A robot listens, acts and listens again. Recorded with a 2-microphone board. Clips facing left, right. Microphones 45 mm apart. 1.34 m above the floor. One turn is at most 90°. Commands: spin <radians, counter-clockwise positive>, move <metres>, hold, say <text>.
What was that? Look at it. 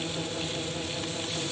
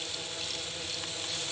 hold
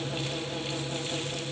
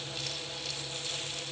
hold
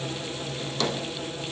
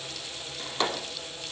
spin -0.44
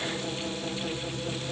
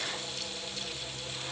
hold
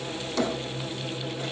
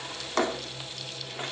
spin -1.57
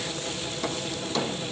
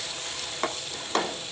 spin -0.96
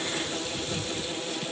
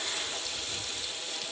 hold
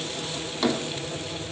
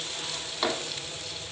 spin -0.17
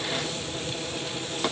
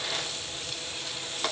say Found it: a drawer, straight ahead, 1 to 2 m away.